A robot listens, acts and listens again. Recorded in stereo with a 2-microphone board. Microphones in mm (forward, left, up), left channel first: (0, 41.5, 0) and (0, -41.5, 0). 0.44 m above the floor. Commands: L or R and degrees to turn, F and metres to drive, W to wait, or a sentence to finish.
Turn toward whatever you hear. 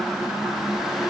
W
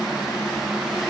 W
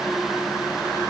I can't make out anything.